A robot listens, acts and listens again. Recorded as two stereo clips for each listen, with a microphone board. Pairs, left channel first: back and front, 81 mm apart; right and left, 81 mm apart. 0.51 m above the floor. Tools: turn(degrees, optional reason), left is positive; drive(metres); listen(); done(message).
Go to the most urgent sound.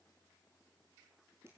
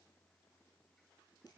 listen()
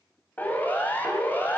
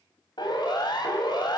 turn(degrees=-110, reason="The siren: 110° right.")
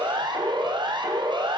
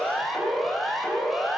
drive(metres=1.0)
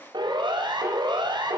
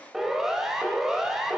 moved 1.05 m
drive(metres=1.0)
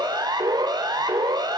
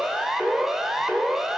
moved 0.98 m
drive(metres=1.0)
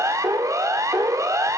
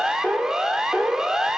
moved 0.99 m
turn(degrees=10, reason="The siren is now 10° left.")
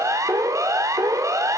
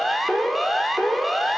drive(metres=1.0)
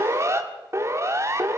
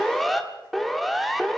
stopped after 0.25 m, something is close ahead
done("Arrived at the siren, straight ahead.")